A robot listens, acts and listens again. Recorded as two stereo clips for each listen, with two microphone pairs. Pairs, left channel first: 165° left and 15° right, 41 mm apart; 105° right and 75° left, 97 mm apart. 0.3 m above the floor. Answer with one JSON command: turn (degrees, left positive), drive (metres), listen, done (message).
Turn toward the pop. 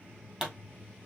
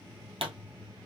{"turn": 55}
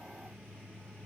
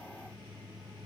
{"done": "Facing where the pop came from. I can't hear it now."}